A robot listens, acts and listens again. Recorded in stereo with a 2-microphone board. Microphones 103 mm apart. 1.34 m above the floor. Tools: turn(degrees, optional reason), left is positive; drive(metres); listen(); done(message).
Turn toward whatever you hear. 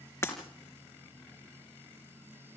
turn(degrees=25, reason="The breaking glass: about 25° left or 155° left.")
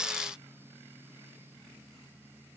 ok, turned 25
listen()
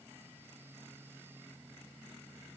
done("I heard breaking glass, but can't make it out now. It was about straight ahead or 130° left.")